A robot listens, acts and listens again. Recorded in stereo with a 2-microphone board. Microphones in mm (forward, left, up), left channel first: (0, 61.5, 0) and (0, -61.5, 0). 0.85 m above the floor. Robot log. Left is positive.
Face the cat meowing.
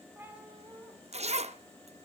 note: The cat meowing: about 20° right or 160° right.
cmd yaw -20
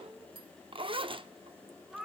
cmd yaw -30
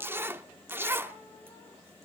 cmd idle
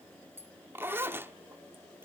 cmd idle
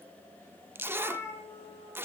note: So it is at 25° left.
cmd yaw +25
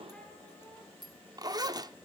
cmd idle
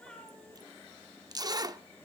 note: The cat meowing is now 10° left.
cmd yaw +10
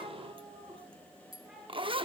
end: Found it: a cat meowing, straight ahead.